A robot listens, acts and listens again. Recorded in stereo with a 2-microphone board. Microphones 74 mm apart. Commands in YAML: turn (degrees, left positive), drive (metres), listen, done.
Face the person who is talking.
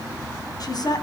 turn: 60
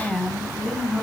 done: "Facing the woman speaking."